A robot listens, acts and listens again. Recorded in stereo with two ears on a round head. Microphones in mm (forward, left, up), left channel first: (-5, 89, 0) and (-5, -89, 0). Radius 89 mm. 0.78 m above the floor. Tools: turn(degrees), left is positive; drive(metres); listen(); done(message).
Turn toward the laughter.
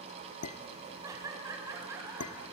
turn(degrees=-30)
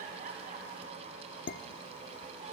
listen()
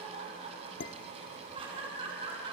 turn(degrees=-25)
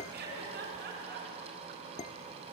turn(degrees=-130)
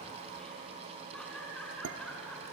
done("Found it: laughter, straight ahead, over 4 m away.")